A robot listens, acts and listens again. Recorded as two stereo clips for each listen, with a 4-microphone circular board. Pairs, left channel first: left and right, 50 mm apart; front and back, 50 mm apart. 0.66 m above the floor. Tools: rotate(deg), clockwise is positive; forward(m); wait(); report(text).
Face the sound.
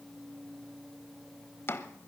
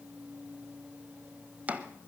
rotate(-120)
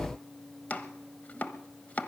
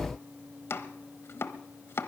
rotate(-35)
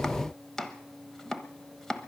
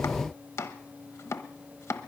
rotate(-10)
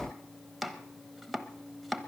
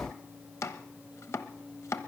report("Facing the chopping.")